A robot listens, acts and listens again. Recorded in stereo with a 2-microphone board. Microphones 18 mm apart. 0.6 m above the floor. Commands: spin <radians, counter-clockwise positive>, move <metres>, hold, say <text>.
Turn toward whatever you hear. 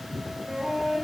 spin -0.87
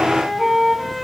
say Facing the flute, 1 to 2 m away.